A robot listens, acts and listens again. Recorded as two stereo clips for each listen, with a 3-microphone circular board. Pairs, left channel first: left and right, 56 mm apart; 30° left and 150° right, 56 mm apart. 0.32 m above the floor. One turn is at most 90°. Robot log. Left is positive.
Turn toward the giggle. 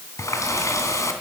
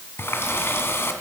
cmd idle
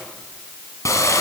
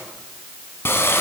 cmd idle
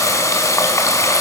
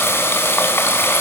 end: I can't make out a giggle to turn to.